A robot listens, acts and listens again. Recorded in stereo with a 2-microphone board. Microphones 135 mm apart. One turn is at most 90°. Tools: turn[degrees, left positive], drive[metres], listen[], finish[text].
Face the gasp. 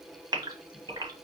Thought: The gasp: about 30° right or 150° right.
Action: turn[-30]
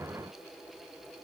Action: listen[]
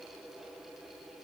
Action: finish[I heard a gasp, but can't make it out now. It was about straight ahead or 120° right.]